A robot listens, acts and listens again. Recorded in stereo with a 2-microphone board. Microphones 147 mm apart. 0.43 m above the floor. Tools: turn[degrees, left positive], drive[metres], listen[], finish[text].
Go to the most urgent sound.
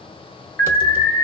Thought: The alarm: about 15° left or 165° left.
Action: turn[15]
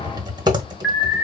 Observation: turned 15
Action: drive[1.0]
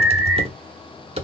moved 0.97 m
Action: drive[1.0]
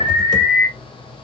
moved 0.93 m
Action: drive[1.0]
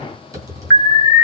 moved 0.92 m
Thought: The alarm is now 15° left.
Action: turn[15]
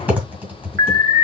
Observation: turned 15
Action: drive[1.0]
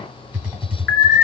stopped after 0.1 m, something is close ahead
Action: finish[I am next to the alarm.]